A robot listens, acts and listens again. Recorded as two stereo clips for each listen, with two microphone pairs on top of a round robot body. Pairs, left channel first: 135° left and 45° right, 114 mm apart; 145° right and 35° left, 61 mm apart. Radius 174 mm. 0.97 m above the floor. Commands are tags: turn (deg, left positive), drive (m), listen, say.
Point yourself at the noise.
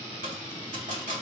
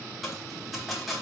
<turn deg="-55"/>
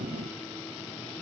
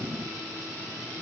<say>Facing where the dropped coin came from. I can't hear it now.</say>